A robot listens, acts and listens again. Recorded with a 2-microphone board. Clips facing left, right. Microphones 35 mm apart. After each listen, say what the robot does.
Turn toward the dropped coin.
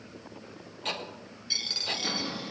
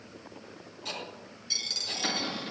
Turn 20° left.
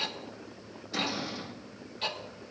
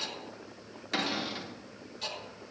Keep listening.
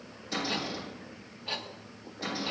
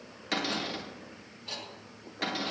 I heard a dropped coin, but can't make it out now. It was about straight ahead or 140° left.